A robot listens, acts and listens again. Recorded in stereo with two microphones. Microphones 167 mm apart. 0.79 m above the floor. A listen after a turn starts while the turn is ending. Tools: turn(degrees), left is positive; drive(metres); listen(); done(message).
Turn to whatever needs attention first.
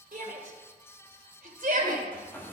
turn(degrees=-55)
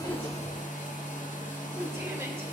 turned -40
listen()
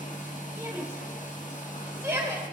turn(degrees=-15)
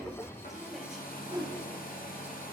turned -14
listen()
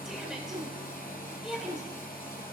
done("Facing the shout.")